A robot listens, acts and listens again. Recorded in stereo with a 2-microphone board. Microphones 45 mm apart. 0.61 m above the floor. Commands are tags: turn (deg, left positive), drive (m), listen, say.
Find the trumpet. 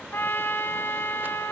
<turn deg="55"/>
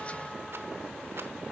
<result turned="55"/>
<listen/>
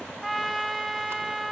<say>Found it: a trumpet, straight ahead.</say>